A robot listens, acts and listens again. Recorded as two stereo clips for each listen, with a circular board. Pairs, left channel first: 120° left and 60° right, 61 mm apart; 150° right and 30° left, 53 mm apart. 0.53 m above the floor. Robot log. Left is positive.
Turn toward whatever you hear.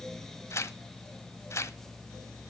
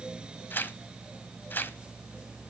note: The tearing paper: 160° left.
cmd yaw +160
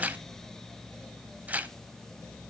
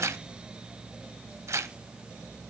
end: Facing the tearing paper.